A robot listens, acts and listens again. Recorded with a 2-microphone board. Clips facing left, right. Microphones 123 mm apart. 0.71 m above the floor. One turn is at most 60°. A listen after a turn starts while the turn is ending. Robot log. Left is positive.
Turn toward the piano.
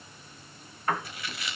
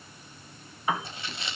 cmd yaw -30
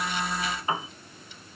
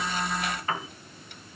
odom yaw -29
note: So it is at 20° left.
cmd yaw +20
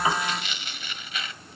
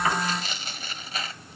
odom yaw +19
cmd idle
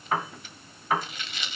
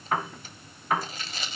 end: Found it: a piano, straight ahead, 1 to 2 m away.